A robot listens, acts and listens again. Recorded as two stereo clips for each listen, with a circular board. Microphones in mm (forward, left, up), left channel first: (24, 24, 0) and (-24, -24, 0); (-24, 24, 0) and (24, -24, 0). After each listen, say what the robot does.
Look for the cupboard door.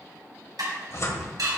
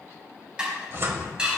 Found it: a cupboard door, straight ahead, 1 to 2 m away.